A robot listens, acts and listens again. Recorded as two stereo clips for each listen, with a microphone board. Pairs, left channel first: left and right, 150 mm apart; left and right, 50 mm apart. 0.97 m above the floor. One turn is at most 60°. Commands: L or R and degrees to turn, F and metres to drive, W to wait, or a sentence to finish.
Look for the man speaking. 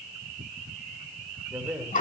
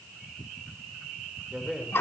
R30
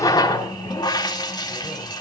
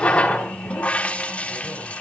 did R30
W
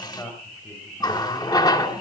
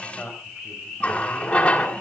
L20
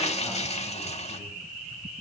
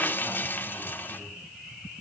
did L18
W
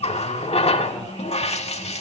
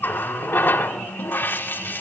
W
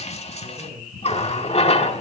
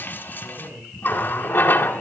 Found it: a man speaking, straight ahead.